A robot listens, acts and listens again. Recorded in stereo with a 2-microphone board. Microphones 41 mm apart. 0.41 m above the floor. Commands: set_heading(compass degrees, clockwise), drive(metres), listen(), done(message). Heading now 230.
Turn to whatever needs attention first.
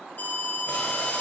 set_heading(180)
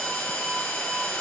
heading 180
done("Found it: an alarm, straight ahead, 1 to 2 m away.")